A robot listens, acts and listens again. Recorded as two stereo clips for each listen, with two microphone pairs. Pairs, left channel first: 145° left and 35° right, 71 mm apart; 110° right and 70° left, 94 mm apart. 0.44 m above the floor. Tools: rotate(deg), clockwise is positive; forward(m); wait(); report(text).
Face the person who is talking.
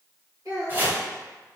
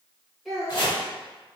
rotate(20)
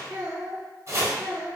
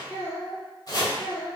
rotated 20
report("Facing the child speaking.")